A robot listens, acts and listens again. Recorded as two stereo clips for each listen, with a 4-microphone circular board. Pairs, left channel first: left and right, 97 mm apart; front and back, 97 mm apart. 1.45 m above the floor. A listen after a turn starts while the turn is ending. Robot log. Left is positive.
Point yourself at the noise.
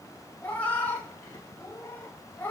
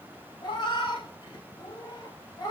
note: The cat meowing: 25° left.
cmd yaw +25
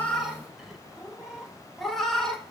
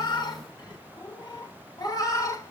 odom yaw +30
end: Found it: a cat meowing, straight ahead, 1 to 2 m away.